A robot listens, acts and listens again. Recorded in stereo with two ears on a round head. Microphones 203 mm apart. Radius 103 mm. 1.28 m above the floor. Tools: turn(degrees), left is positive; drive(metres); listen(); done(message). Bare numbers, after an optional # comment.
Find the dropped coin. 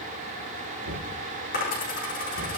# The dropped coin: about 40° left or 140° left.
turn(40)
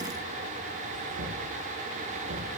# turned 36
listen()
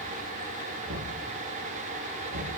done("I heard a dropped coin, but can't make it out now. It was about straight ahead or 105° left.")